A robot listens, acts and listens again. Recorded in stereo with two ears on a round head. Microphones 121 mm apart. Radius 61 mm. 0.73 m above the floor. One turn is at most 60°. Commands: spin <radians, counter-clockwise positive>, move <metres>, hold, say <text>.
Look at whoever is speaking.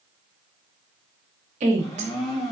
spin -0.96
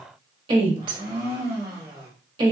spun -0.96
spin -0.79
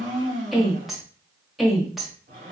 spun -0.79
say Facing the woman speaking, 1 to 2 m away.